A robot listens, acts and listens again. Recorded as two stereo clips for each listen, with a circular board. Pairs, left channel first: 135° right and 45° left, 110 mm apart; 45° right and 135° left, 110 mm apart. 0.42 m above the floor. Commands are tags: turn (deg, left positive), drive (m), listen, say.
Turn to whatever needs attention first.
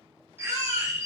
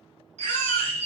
<turn deg="-10"/>
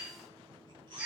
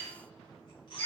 <say>Found it: a baby crying, straight ahead.</say>